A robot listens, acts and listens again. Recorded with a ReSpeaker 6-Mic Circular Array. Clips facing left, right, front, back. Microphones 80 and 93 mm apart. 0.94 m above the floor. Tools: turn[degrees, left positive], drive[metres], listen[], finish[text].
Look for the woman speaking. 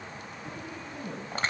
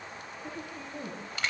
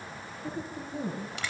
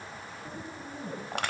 Thought: The woman speaking: 35° right.
Action: turn[-35]
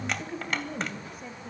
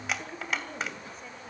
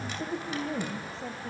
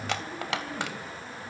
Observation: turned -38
Thought: The woman speaking is now 10° left.
Action: turn[10]
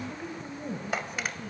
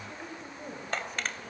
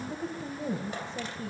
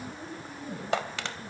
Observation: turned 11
Action: finish[Found it: a woman speaking, straight ahead, over 4 m away.]